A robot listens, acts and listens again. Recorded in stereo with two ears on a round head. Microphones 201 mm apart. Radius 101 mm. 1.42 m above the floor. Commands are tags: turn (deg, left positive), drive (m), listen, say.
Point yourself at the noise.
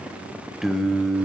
<turn deg="30"/>
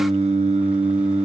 <turn deg="-30"/>
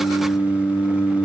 <turn deg="10"/>
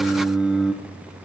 <say>Facing the singing, under 1 m away.</say>